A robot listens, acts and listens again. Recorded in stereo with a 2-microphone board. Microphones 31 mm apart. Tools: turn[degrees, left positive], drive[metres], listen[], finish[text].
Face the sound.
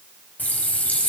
Thought: The running tap: about 70° left or 110° left.
Action: turn[70]
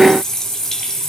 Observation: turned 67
Thought: So it is at 25° left.
Action: turn[25]
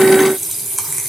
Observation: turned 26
Action: finish[Found it: a running tap, straight ahead, 2 to 4 m away.]